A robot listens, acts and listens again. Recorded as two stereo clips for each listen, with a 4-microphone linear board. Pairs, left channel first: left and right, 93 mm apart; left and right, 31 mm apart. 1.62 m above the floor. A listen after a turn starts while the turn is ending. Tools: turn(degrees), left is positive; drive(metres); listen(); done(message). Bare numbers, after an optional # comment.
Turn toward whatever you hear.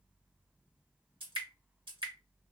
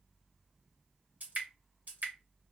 # The dripping: about 60° right or 120° right.
turn(-60)
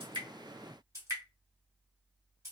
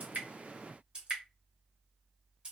# So it is at 40° right.
turn(-40)
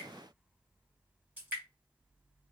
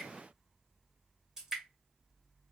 # The dripping is now 20° right.
turn(-20)
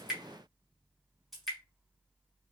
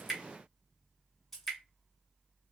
done("Facing the dripping, 1 to 2 m away.")